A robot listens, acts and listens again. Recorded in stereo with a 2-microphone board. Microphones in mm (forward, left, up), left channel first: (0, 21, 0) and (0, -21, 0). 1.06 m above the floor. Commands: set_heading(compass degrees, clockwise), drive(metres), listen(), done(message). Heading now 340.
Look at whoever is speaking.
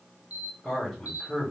set_heading(320)
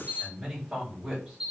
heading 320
done("Facing the man speaking, 2 to 4 m away.")